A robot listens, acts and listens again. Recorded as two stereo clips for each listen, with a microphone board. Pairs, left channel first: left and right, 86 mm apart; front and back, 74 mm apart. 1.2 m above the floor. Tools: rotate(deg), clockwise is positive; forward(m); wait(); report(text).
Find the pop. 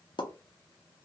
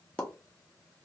rotate(-75)
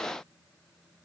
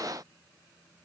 report("Facing where the pop came from. I can't hear it now.")